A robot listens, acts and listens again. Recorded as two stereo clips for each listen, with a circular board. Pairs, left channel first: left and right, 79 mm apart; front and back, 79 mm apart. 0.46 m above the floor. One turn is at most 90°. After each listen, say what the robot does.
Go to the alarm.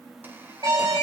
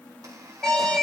Turn 80° right.
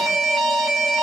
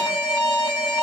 Drive 1.0 m forward.
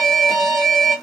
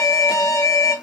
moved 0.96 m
Drive 1.0 m forward.
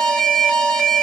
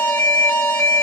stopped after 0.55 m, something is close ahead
Turn 10° left.
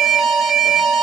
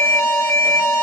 Arrived at the alarm, straight ahead.